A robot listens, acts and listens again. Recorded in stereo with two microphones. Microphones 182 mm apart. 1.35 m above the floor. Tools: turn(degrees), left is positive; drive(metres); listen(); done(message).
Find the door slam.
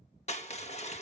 listen()
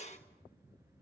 listen()
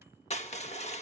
done("I can't make out a door slam to turn to.")